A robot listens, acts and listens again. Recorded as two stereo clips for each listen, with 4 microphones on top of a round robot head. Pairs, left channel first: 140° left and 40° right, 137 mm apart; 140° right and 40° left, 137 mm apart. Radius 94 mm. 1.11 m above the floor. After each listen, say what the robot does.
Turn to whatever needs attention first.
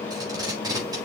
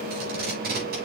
Keep listening.
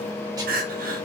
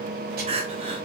Turn 10° right.
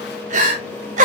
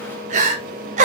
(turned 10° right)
Found it: crying, straight ahead, 1 to 2 m away.